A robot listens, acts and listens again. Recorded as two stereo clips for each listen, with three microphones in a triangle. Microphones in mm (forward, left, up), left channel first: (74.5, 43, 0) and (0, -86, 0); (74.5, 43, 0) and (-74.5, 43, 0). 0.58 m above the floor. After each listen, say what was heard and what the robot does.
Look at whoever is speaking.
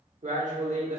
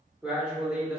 The man speaking: 100° right. Turn 100° right.
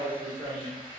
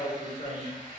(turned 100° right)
The man speaking is now 10° right. Turn 10° right.
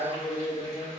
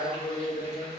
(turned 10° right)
Facing the man speaking.